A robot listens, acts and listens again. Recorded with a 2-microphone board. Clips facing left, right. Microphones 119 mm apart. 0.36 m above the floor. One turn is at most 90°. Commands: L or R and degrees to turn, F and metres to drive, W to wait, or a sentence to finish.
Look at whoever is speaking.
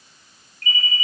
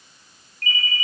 W
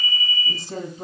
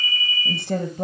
R65
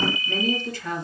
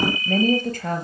R50
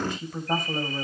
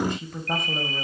Facing the woman speaking.